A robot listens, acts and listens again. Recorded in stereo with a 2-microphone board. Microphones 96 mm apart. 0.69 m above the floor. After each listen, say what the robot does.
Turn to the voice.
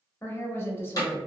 Turn 25° left.
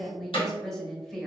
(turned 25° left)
Facing the woman speaking, under 1 m away.